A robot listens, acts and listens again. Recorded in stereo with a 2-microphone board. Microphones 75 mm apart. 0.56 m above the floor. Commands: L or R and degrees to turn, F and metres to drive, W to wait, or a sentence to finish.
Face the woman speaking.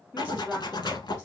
R30
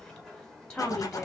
L25
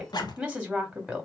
Facing the woman speaking.